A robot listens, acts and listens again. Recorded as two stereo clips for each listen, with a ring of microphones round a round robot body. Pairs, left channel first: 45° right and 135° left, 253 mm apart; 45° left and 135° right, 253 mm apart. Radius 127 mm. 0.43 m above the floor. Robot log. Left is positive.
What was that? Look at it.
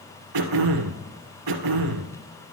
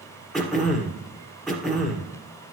note: The throat clearing: 135° left.
cmd yaw +135
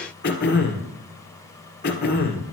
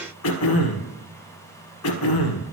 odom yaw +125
note: The throat clearing is now 10° left.
cmd yaw +10
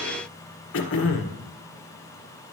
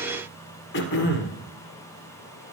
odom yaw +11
end: Facing the throat clearing.